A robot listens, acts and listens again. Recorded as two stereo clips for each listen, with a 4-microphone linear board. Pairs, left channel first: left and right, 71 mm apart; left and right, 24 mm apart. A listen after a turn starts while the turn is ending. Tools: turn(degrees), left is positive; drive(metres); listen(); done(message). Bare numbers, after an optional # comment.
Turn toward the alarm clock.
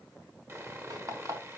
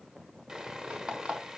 # The alarm clock: about 50° right or 130° right.
turn(-50)
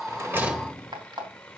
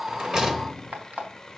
# So it is at 80° right.
turn(-80)
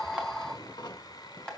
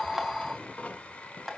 # The alarm clock is now 15° left.
turn(15)
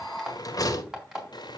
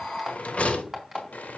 # The alarm clock is now 10° right.
turn(-10)
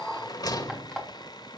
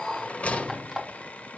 done("Facing the alarm clock.")